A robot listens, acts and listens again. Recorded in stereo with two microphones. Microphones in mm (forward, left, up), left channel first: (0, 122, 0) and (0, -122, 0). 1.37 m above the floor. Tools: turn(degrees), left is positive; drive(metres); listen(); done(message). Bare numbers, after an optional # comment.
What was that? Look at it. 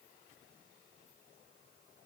listen()
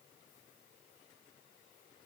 listen()
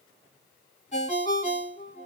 # The ringtone: about 25° left or 155° left.
turn(25)
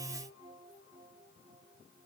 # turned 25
listen()
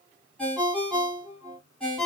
done("Found it: a ringtone, straight ahead, 2 to 4 m away.")